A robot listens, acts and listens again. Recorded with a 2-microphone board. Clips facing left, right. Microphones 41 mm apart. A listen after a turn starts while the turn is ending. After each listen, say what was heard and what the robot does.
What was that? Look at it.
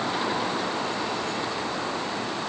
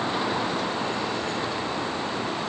Keep listening.
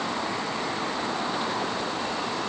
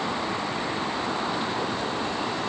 Keep listening.
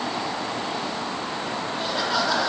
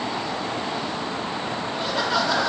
Turn 30° right.
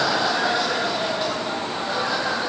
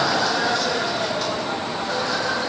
So it is at 25° left. Turn 25° left.
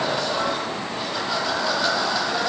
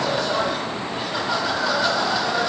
Facing the laughter, over 4 m away.